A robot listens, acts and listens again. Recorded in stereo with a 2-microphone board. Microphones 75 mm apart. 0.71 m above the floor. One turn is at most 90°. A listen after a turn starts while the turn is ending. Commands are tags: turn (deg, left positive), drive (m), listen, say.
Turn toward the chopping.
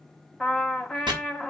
<turn deg="-75"/>
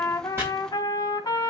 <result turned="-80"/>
<listen/>
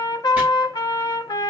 <listen/>
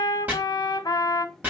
<turn deg="-25"/>
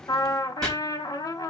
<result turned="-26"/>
<say>Facing the chopping.</say>